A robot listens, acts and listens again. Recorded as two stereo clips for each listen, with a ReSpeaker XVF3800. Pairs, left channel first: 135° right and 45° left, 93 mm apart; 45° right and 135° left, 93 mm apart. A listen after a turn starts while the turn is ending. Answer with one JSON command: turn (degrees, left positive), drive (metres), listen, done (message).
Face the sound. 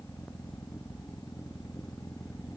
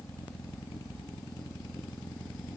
{"listen": true}
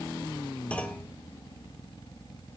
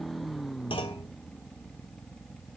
{"turn": -60}
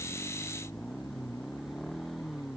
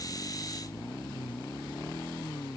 {"done": "Facing where the clunk came from. I can't hear it now."}